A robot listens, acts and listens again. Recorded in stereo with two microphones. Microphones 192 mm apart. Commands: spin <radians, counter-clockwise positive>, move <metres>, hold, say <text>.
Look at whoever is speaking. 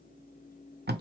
hold
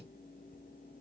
hold
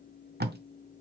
say I can't make out anyone speaking to turn to.